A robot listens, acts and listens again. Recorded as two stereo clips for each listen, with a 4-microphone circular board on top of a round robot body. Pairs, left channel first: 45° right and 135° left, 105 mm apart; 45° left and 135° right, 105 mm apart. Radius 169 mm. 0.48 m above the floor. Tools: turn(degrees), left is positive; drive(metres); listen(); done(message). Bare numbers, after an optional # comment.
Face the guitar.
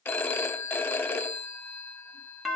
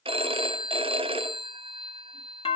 listen()
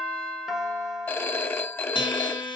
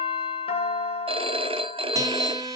# The guitar: 85° right.
turn(-85)
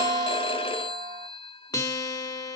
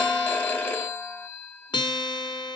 done("Found it: a guitar, straight ahead, 1 to 2 m away.")